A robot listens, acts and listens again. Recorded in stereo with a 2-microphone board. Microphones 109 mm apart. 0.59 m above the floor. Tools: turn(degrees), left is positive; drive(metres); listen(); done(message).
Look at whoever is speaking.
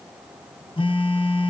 listen()
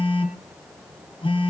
listen()
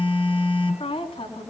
turn(degrees=75)
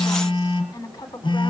turn(degrees=35)
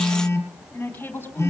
turn(degrees=15)
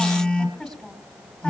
done("Found it: a woman speaking, straight ahead, over 4 m away.")